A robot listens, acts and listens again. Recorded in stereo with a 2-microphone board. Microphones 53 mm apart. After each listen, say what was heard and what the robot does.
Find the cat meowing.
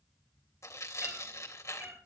The cat meowing: about 35° right or 145° right. Turn 35° right.
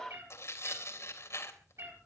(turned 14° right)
The cat meowing: about 60° right or 120° right. Turn 60° right.
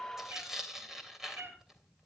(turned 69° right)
So it is at 45° right. Turn 45° right.
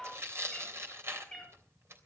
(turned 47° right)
Facing the cat meowing, over 4 m away.